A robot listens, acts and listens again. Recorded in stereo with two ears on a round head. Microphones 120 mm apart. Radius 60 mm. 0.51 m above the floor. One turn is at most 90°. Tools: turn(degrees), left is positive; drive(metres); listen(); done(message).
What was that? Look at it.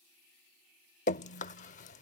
turn(degrees=60)
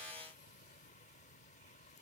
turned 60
listen()
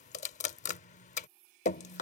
turn(degrees=60)
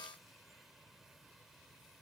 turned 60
listen()
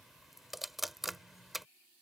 done("Facing the dripping.")